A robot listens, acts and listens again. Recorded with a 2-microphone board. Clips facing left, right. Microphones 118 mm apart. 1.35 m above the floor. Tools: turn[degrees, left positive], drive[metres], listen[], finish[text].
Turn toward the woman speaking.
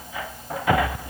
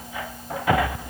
Action: listen[]
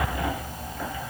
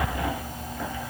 Action: listen[]
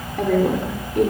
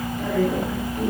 Thought: The woman speaking: about 75° left or 105° left.
Action: turn[75]
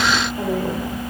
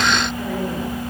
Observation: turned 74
Action: listen[]
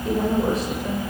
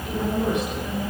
Action: listen[]
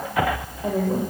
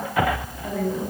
Thought: So it is at 40° left.
Action: turn[40]
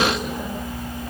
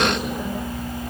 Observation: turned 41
Action: listen[]
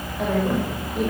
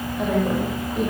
Action: finish[Facing the woman speaking.]